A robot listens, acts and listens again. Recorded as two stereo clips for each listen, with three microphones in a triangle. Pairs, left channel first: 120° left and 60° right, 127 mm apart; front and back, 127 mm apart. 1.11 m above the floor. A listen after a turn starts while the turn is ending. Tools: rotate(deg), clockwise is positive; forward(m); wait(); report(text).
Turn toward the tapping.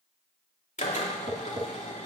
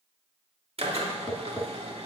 rotate(85)
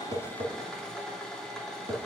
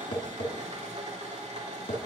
rotate(20)
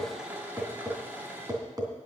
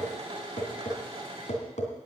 report("Found it: tapping, straight ahead.")